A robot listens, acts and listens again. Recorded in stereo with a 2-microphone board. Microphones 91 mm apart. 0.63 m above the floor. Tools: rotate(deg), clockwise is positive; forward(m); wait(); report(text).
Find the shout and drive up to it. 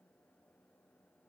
wait()
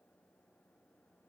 wait()
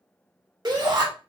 rotate(50)
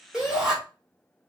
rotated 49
forward(1.0)
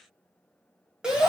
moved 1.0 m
rotate(10)
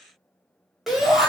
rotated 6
forward(1.0)
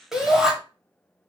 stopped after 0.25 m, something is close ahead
report("I am next to the shout.")